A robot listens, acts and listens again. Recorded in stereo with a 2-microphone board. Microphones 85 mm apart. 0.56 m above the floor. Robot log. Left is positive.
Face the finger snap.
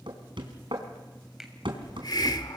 cmd yaw -30
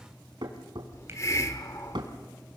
cmd idle
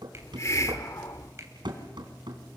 note: So it is at 145° right.
cmd yaw -145
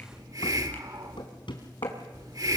cmd idle
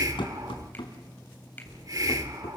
note: The finger snap is now 25° left.
cmd yaw +25
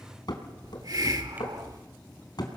cmd idle
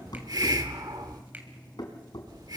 note: The finger snap is now 20° right.
cmd yaw -20
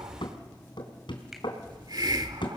cmd idle
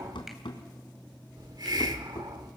cmd idle
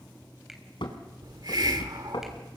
end: I heard a finger snap from this way, but can't make it out now.